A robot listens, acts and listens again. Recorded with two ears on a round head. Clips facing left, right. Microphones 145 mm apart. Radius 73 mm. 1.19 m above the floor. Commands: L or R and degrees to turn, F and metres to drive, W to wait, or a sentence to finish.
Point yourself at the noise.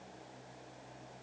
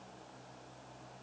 W
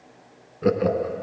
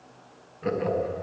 L55
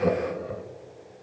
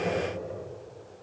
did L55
L70
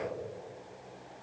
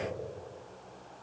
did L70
R10
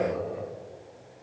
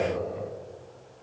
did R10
Found it: laughter, straight ahead, 1 to 2 m away.